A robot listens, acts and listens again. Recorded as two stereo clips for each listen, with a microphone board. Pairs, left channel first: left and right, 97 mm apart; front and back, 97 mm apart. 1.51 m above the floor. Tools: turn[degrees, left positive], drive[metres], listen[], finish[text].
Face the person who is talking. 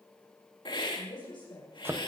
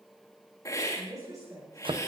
Thought: The woman speaking: 125° left.
Action: turn[125]
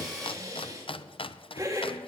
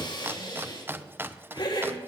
Action: listen[]
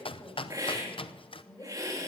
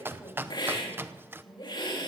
Thought: The woman speaking is now 35° left.
Action: turn[35]
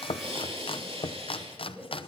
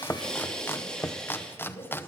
Thought: The woman speaking is now 10° right.
Action: turn[-10]
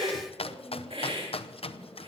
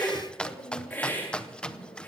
Action: finish[Found it: a woman speaking, straight ahead.]